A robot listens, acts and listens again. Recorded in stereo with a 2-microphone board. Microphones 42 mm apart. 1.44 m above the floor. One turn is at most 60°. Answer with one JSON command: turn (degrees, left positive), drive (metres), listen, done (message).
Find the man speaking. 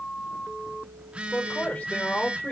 {"turn": 40}
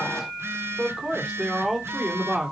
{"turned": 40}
{"done": "Found it: a man speaking, straight ahead."}